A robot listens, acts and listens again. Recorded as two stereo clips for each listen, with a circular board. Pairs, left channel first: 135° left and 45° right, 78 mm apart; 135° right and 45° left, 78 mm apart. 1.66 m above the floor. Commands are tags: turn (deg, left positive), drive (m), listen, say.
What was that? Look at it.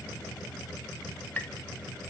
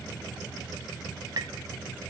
<turn deg="70"/>
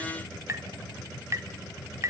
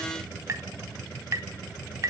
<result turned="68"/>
<say>Found it: tapping, straight ahead, 1 to 2 m away.</say>